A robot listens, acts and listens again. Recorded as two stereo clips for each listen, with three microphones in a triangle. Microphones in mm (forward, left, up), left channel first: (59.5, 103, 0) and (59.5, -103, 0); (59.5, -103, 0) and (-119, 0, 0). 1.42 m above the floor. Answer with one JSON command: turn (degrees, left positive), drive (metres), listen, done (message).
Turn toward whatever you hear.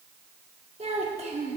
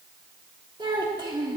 {"turn": -145}
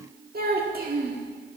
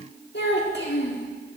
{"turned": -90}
{"turn": -55}
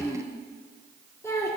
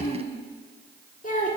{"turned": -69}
{"turn": 15}
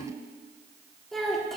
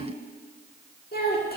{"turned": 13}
{"done": "Found it: a child speaking, straight ahead, 1 to 2 m away."}